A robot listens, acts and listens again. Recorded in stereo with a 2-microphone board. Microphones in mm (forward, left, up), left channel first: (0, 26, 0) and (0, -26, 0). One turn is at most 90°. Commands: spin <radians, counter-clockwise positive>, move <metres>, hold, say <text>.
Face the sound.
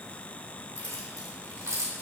spin -1.57
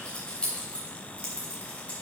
spin 0.44
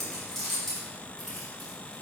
say Found it: keys jangling, straight ahead.